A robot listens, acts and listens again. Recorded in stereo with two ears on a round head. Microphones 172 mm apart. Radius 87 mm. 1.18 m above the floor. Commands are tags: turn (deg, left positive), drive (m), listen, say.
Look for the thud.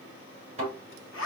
<turn deg="-35"/>
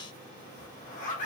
<listen/>
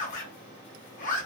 <say>I heard a thud, but can't make it out now. It was about straight ahead or 110° right.</say>